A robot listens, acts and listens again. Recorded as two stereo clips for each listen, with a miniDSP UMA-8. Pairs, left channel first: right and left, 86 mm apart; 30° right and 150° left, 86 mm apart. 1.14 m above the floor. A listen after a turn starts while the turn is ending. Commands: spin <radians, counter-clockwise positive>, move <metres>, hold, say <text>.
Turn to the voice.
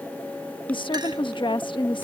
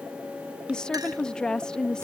spin -1.92
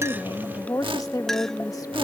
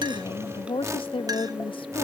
spin -0.70
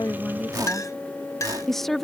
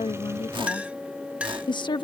say Facing the woman speaking.